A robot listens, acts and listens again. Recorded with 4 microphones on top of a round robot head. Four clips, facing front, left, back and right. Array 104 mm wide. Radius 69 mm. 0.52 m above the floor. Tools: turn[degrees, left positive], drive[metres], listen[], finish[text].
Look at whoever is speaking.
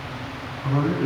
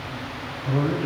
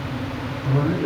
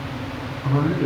Thought: The man speaking: 50° right.
Action: turn[-50]
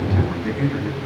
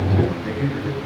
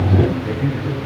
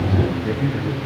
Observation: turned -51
Action: finish[Facing the man speaking, over 4 m away.]